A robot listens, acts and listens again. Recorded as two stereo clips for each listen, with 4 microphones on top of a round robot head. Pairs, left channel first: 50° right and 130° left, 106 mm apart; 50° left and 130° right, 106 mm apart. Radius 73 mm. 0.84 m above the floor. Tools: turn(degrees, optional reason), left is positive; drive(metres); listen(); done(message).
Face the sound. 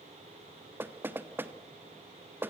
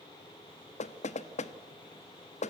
turn(degrees=55, reason="The knocking: 55° left.")
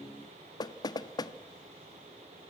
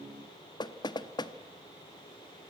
done("Facing the knocking.")